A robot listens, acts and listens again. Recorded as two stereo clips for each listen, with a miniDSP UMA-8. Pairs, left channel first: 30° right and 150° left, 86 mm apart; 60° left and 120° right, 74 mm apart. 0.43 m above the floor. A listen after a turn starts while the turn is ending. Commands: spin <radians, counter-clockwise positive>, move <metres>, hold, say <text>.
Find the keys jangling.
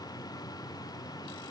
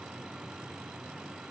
hold
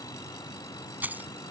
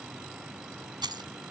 spin -2.44
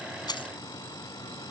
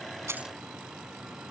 hold
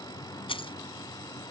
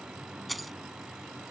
spin -0.52
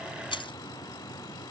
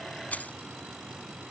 spin -0.17
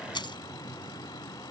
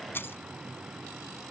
say Facing the keys jangling.